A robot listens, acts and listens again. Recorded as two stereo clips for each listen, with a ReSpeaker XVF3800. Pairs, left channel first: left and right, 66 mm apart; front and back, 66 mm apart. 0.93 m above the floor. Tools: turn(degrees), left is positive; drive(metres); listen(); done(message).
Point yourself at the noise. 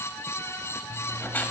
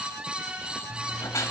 turn(degrees=30)
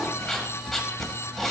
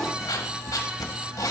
done("Facing the writing.")